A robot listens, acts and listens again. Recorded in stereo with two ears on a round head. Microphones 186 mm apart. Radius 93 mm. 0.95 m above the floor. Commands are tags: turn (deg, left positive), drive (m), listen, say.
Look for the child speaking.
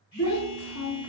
<turn deg="90"/>
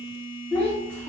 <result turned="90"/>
<say>Facing the child speaking.</say>